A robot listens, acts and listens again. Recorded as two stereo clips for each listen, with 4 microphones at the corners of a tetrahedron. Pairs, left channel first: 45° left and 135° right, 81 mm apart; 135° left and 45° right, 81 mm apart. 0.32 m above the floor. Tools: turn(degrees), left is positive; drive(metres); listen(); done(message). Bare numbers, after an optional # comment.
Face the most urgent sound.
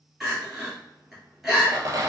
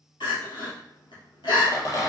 # The crying: 140° left.
turn(140)
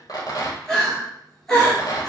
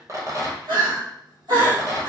# The crying is now 40° right.
turn(-40)
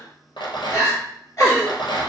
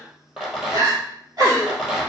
done("Found it: crying, straight ahead.")